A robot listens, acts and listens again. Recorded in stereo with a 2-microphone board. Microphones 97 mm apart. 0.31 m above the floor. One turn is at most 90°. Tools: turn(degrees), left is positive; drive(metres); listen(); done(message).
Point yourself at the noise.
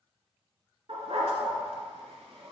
turn(degrees=-75)
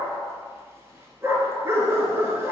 turn(degrees=-30)
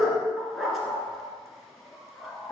done("Found it: a dog barking, straight ahead.")